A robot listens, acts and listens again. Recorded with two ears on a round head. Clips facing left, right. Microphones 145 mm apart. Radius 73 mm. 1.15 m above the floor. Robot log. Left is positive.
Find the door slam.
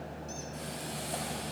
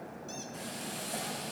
cmd idle
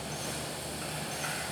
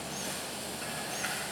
cmd idle
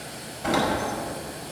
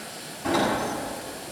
cmd yaw +90
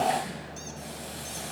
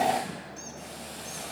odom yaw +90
end: I heard a door slam from this way, but can't make it out now.